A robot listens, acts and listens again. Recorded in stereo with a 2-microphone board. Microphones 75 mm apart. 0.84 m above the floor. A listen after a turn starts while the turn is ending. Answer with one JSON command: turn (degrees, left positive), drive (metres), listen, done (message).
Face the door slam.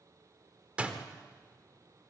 {"turn": -15}
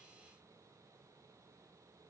{"listen": true}
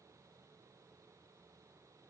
{"done": "I heard a door slam, but can't make it out now. It was about straight ahead or 150° right."}